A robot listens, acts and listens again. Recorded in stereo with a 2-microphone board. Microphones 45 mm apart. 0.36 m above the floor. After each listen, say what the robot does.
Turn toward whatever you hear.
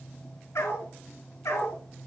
Turn 90° left.
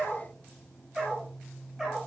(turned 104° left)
Turn 15° right.
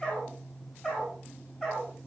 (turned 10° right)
Facing the dog barking, over 4 m away.